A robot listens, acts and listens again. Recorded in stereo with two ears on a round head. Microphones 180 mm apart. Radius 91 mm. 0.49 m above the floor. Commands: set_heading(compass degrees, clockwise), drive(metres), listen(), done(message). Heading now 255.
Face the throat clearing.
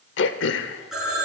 set_heading(195)
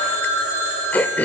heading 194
set_heading(184)
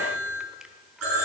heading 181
listen()
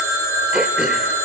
listen()
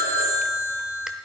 done("Facing where the throat clearing came from. I can't hear it now.")